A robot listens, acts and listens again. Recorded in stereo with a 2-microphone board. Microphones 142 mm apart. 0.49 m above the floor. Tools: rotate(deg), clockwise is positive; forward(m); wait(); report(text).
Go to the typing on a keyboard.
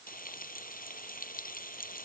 wait()
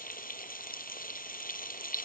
wait()
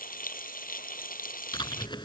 rotate(-35)
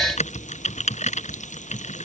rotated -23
rotate(-125)
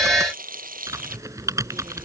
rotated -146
rotate(20)
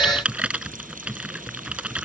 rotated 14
forward(1.0)
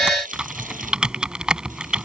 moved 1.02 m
forward(1.0)
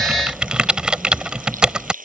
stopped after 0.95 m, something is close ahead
report("Arrived at the typing on a keyboard, straight ahead.")